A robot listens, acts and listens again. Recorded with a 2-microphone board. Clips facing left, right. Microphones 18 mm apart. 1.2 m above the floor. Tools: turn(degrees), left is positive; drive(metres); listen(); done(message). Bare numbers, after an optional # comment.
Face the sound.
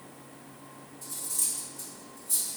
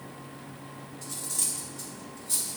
# The cutlery clinking: about 40° right or 140° right.
turn(-40)
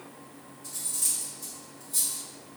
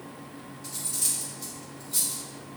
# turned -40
# So it is at 100° right.
turn(-100)
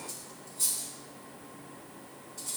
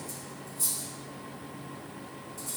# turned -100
# The cutlery clinking is now 35° left.
turn(35)
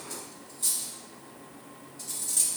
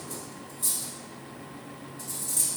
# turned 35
# The cutlery clinking is now 25° left.
turn(25)
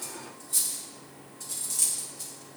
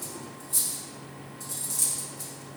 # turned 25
# The cutlery clinking is now 15° left.
turn(15)
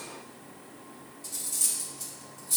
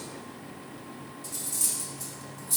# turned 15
done("Found it: cutlery clinking, straight ahead, 1 to 2 m away.")